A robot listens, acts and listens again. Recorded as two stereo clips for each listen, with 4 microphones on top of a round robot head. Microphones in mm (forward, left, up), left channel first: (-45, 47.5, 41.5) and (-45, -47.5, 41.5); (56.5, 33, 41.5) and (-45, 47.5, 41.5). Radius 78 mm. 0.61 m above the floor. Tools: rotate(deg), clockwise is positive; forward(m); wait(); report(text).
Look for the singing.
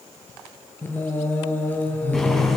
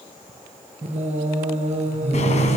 rotate(-165)
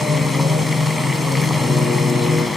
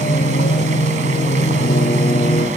report("Found it: singing, straight ahead, over 4 m away.")